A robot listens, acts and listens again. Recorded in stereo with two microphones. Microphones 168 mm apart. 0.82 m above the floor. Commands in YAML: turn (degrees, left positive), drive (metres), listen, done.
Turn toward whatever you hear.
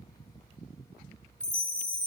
turn: 50
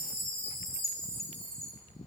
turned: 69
turn: -15
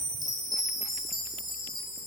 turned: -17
done: "Facing the chime."